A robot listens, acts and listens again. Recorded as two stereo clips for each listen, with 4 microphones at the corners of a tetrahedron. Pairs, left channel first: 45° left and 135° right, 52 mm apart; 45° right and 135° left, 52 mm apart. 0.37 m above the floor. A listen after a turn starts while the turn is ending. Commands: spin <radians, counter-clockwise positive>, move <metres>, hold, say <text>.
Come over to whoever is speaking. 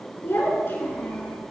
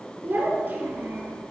spin 1.40
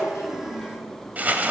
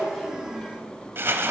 spin 0.26
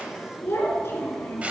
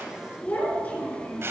spin 0.17
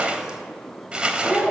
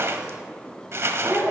move 1.0
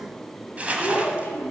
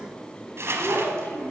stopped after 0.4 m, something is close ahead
say Something is in my way. I am facing the child speaking but have not reached it.